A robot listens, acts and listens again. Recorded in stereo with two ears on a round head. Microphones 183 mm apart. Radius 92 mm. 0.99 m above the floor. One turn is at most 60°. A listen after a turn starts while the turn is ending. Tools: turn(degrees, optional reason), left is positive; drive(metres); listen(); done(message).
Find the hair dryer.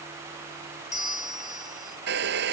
turn(degrees=-55, reason="The hair dryer: about 55° right or 125° right.")
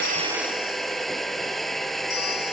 done("Facing the hair dryer.")